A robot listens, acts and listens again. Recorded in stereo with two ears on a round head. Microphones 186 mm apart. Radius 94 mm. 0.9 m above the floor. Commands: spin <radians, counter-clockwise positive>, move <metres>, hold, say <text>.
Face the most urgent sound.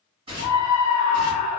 spin 0.70
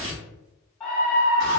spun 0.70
say Found it: a scream, straight ahead.